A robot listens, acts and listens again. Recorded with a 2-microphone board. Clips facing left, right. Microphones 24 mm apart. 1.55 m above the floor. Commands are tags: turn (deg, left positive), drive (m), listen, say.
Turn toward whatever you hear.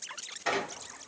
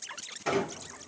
<turn deg="15"/>
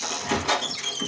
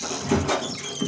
<turn deg="145"/>
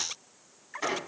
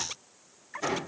<turn deg="45"/>
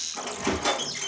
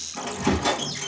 <say>Facing the squeak, 1 to 2 m away.</say>